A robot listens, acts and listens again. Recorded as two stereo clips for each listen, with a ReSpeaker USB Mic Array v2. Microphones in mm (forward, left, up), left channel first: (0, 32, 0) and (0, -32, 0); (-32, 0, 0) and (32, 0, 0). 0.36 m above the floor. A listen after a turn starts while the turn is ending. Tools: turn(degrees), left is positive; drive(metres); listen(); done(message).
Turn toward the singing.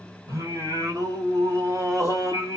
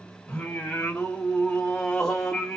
turn(degrees=-100)
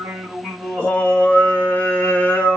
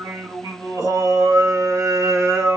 turn(degrees=35)
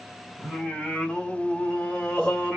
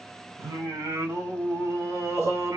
turn(degrees=20)
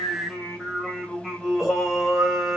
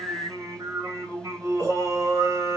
done("Facing the singing.")